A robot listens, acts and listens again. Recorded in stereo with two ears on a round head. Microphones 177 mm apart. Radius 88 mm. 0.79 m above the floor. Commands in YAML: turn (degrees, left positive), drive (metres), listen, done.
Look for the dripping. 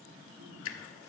turn: 70
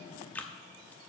turn: 10
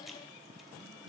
listen: true
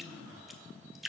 done: "Facing the dripping, under 1 m away."